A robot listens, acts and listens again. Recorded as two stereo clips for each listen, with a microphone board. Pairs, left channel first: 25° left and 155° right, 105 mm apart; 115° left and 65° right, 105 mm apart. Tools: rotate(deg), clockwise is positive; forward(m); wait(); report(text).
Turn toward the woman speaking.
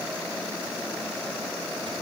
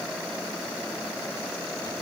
wait()
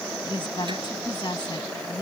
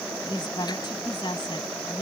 rotate(-70)
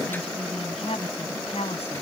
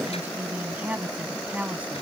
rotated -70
rotate(-10)
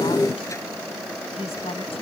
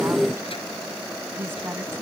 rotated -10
report("Found it: a woman speaking, straight ahead.")